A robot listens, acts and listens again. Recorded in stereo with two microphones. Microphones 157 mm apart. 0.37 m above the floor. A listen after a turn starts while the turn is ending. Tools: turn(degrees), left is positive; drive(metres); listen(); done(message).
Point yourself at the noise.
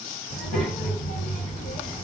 turn(degrees=60)
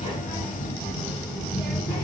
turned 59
turn(degrees=15)
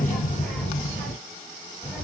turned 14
done("Found it: a child speaking, straight ahead, 1 to 2 m away.")